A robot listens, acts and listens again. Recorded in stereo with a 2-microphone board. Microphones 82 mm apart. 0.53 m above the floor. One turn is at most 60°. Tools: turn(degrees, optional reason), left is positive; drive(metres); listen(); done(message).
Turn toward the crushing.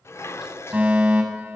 listen()
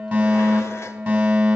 listen()
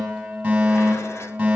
done("I can't make out crushing to turn to.")